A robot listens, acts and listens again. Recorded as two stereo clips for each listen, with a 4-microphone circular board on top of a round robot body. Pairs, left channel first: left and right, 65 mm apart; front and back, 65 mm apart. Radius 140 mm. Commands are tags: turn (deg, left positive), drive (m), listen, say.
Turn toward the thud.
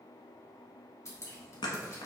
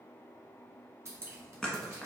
<turn deg="80"/>
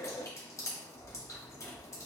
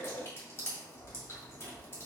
<say>Facing where the thud came from. I can't hear it now.</say>